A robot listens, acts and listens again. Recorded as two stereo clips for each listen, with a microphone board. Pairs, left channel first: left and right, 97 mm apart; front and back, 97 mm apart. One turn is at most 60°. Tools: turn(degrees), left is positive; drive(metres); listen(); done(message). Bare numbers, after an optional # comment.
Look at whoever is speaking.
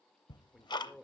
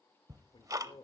done("Found it: a man speaking, straight ahead, 1 to 2 m away.")